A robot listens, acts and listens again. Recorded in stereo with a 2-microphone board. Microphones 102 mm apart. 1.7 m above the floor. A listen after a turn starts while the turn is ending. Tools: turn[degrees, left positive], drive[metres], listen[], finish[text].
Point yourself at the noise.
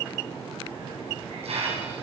Thought: The hiss: about 70° right or 110° right.
Action: turn[-70]
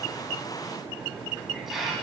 Action: finish[Found it: a hiss, straight ahead.]